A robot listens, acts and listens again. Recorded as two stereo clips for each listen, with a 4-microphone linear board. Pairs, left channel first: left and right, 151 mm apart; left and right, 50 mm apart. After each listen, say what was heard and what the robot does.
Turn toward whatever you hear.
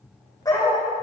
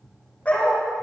The dog barking: about 25° left or 155° left. Turn 25° left.
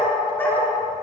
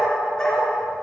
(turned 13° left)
Turn 30° left.
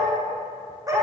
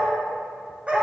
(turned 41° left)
So it is at 25° right. Turn 25° right.
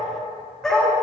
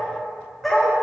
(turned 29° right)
Found it: a dog barking, straight ahead, over 4 m away.